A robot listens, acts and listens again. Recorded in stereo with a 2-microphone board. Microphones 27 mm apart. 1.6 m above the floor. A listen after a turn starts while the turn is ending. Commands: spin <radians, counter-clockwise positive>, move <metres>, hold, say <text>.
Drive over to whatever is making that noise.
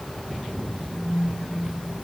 spin -1.13
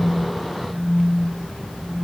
spin -0.87
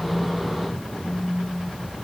move 1.0
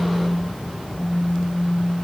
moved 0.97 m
move 1.0
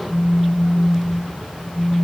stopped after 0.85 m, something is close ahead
spin -0.26
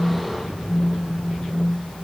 say I am next to the phone buzzing.